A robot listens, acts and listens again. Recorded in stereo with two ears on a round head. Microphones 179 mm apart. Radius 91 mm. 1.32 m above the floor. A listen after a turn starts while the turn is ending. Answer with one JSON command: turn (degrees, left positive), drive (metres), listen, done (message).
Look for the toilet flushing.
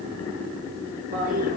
{"turn": -40}
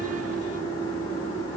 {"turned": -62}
{"turn": 15}
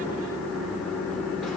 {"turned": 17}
{"listen": true}
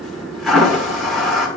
{"done": "Facing the toilet flushing."}